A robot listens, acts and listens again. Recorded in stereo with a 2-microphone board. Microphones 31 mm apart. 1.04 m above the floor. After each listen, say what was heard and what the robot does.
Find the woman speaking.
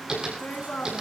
Turn 90° left.
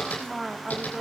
So it is at 15° right. Turn 15° right.
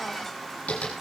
Keep listening.
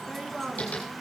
The woman speaking is now 10° right. Turn 10° right.
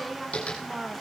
The woman speaking is now 15° right. Turn 15° right.
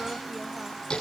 Keep listening.
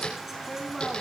Facing the woman speaking.